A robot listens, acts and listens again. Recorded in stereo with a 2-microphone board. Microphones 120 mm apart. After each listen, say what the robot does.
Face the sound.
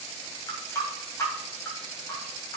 Turn 25° left.
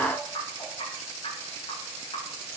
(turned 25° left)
Turn 130° left.
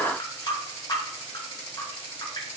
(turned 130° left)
Turn 40° left.
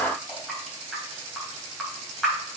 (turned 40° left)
Facing the running tap, 2 to 4 m away.